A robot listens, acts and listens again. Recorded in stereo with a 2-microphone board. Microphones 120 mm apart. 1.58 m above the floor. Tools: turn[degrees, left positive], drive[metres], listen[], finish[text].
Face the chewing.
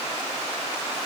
Action: listen[]
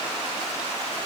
Action: listen[]
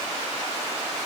Action: finish[I can't make out chewing.]